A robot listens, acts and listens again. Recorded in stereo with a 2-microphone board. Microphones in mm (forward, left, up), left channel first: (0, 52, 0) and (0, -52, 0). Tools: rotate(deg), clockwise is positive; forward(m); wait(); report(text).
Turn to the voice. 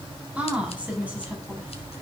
rotate(30)
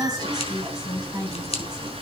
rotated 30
rotate(135)
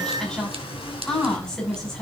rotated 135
report("Facing the woman speaking.")